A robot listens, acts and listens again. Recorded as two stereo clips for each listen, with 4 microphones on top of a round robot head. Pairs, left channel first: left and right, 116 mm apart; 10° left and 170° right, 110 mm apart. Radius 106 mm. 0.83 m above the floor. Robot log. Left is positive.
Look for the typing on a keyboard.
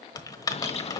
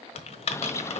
note: The typing on a keyboard: 35° left.
cmd yaw +35
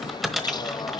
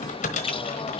end: Found it: typing on a keyboard, straight ahead, 1 to 2 m away.